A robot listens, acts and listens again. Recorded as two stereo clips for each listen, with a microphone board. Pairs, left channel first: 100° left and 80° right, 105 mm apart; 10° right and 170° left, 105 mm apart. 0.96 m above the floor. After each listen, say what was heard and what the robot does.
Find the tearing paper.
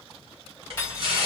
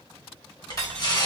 The tearing paper: 55° right. Turn 55° right.
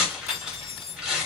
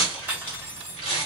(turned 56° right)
Facing the tearing paper.